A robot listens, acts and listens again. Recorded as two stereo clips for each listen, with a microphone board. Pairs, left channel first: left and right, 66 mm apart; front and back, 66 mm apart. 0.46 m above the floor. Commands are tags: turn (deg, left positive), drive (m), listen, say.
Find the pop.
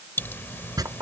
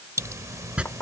<turn deg="145"/>
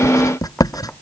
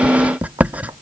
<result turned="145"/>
<say>I heard a pop from this way, but can't make it out now.</say>